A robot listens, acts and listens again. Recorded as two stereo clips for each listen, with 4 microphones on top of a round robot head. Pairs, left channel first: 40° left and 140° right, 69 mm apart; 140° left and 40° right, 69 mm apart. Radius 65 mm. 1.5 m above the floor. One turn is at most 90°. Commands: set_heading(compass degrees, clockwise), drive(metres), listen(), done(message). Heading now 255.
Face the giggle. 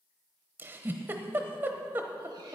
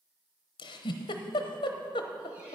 set_heading(165)
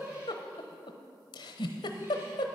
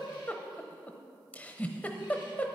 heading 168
set_heading(103)
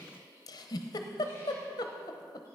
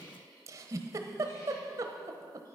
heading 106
done("Found it: a giggle, straight ahead.")